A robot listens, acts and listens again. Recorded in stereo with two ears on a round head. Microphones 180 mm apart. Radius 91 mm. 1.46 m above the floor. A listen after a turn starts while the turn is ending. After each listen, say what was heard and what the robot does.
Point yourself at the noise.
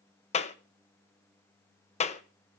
The clap: about 35° left or 145° left. Turn 35° left.
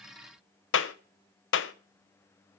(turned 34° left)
So it is at 110° left. Turn 110° left.
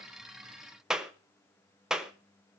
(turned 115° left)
Found it: a clap, straight ahead, 1 to 2 m away.